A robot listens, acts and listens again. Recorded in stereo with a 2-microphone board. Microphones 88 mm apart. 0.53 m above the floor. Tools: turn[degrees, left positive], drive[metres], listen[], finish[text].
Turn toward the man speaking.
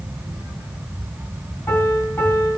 Action: listen[]
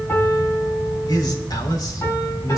Thought: The man speaking: about 45° left or 135° left.
Action: turn[45]
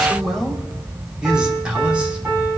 Thought: So it is at 15° right.
Action: turn[-15]
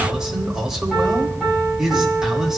Action: finish[Found it: a man speaking, straight ahead, 2 to 4 m away.]